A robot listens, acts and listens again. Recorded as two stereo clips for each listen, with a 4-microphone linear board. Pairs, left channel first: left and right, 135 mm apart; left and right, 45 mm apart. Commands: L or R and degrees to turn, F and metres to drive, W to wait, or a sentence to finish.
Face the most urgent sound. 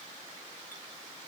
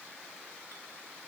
W
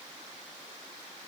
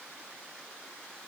W
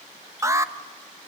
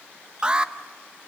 R20
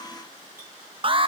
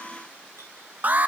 R135
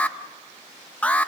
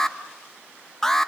L10
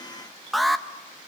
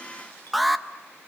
Found it: an alarm, straight ahead.